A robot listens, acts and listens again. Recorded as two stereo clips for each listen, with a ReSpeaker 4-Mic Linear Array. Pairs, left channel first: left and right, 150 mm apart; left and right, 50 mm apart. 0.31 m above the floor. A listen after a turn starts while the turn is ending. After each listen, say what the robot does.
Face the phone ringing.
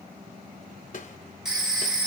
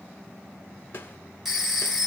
Turn 30° right.
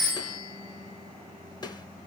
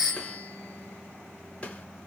Turn 25° left.
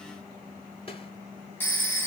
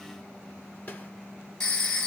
Turn 15° left.
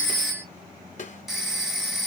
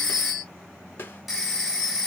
Facing the phone ringing, 1 to 2 m away.